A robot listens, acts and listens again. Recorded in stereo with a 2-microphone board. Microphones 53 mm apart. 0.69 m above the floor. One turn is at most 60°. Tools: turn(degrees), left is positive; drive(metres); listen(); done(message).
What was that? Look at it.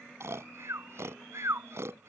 turn(degrees=-60)
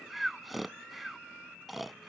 done("Found it: snoring, straight ahead.")